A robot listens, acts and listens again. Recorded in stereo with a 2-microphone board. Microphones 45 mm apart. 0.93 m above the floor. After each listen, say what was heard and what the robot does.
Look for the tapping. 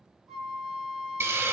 Keep listening.
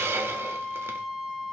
Keep listening.
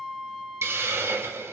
I can't make out tapping, only a hiss and a flute.